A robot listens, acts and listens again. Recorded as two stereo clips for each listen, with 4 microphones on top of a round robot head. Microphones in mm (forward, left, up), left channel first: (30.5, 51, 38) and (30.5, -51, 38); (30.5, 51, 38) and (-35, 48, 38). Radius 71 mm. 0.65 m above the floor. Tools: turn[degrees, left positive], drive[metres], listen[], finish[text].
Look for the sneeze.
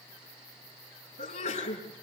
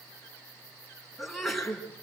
Thought: The sneeze: 95° left.
Action: turn[95]
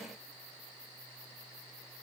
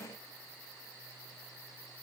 Action: finish[I heard a sneeze from this way, but can't make it out now.]